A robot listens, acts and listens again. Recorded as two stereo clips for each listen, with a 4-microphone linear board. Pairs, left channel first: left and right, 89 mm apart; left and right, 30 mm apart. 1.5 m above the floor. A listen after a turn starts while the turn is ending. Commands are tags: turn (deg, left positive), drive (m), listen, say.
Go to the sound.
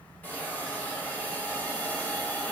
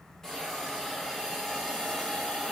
<turn deg="20"/>
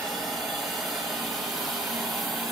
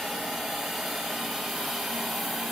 <drive m="1.0"/>
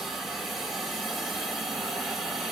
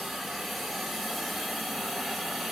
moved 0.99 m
<drive m="1.0"/>
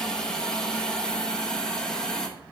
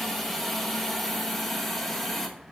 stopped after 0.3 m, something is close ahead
<turn deg="10"/>
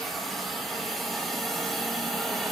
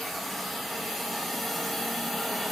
<say>Arrived at the hiss, straight ahead.</say>